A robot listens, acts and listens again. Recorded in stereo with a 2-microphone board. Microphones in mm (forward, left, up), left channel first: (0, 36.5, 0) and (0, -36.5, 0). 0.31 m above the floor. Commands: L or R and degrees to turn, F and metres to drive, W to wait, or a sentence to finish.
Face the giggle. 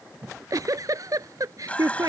R55
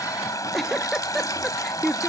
Found it: a giggle, straight ahead.